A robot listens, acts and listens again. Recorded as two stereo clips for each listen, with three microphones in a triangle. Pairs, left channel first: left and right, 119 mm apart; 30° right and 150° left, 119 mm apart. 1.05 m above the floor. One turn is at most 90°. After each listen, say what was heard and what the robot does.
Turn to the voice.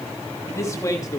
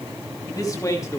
The man speaking: 30° left. Turn 30° left.
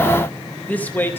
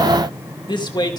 The man speaking is now 20° left. Turn 20° left.
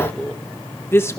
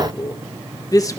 The man speaking is now 30° left. Turn 30° left.
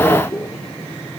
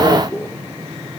The man speaking is now 30° left. Turn 30° left.
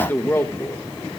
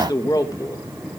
The man speaking is now 25° left. Turn 25° left.
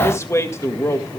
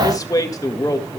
The man speaking is now 25° left. Turn 25° left.
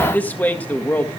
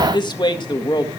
The man speaking is now 15° left. Turn 15° left.
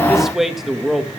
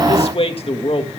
Facing the man speaking.